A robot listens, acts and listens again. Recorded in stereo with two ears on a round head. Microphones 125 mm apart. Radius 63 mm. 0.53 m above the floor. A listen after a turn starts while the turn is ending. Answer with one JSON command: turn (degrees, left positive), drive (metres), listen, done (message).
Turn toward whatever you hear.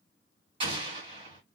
{"turn": -40}
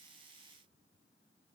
{"listen": true}
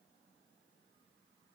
{"done": "I heard an explosion, but can't make it out now. It was about straight ahead or 100° right."}